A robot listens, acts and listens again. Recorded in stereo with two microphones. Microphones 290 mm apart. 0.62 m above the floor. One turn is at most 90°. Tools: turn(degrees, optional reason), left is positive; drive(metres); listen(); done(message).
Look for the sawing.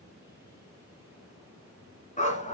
listen()
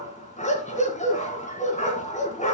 listen()
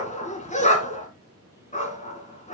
done("I can't make out sawing to turn to.")